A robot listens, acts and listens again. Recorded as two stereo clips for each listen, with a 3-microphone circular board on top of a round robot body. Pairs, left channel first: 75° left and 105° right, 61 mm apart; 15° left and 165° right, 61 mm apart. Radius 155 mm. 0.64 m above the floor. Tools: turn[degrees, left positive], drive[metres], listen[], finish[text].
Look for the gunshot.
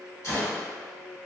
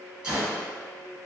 Thought: The gunshot: 120° left.
Action: turn[120]
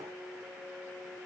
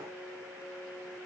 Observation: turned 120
Action: finish[Facing where the gunshot came from. I can't hear it now.]